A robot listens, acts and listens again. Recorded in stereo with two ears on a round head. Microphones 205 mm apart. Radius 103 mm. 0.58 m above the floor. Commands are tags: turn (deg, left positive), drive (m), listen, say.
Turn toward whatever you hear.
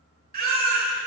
<turn deg="-45"/>
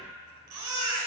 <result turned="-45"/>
<turn deg="-90"/>
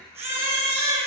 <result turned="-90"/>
<turn deg="-10"/>
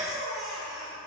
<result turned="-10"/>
<say>Facing the baby crying.</say>